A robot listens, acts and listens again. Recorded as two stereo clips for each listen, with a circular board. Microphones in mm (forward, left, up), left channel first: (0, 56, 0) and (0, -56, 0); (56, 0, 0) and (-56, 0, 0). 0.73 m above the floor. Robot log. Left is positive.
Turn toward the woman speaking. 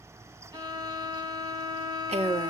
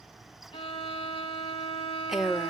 note: The woman speaking: 100° right.
cmd yaw -100
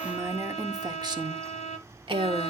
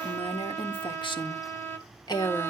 note: The woman speaking is now 55° right.
cmd yaw -55
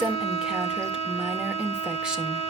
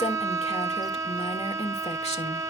note: The woman speaking is now 10° right.
cmd yaw -10
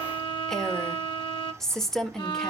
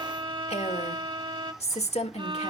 end: Facing the woman speaking, 1 to 2 m away.